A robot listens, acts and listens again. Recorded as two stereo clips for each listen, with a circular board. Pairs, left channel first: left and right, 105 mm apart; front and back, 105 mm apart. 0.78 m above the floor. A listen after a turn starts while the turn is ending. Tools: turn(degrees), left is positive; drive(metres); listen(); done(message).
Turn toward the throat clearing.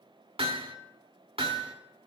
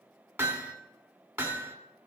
listen()
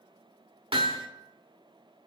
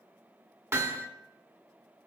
listen()
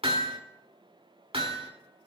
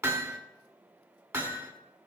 done("I can't make out throat clearing to turn to.")